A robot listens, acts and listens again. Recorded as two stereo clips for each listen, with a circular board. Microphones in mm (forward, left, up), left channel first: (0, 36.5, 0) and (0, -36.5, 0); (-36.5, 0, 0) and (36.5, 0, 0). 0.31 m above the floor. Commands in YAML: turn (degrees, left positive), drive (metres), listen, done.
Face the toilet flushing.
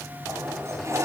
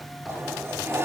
turn: -55
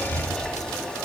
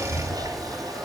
turn: 10
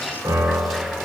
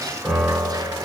listen: true
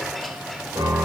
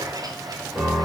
done: "Facing the toilet flushing, 2 to 4 m away."